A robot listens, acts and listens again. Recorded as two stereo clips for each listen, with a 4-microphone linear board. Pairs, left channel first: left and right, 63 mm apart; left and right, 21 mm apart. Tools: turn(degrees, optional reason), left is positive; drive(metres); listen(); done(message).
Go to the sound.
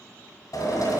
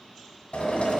turn(degrees=90)
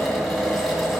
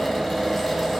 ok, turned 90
drive(metres=1.0)
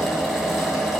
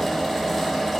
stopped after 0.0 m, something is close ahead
done("Blocked. The drill is further on, straight ahead.")